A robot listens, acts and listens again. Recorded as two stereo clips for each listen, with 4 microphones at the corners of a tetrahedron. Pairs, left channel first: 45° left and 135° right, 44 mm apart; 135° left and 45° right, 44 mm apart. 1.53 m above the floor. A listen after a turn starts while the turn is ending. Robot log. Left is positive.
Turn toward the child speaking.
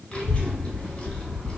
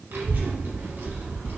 note: The child speaking: 15° right.
cmd yaw -15
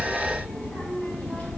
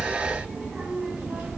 end: Facing the child speaking, 1 to 2 m away.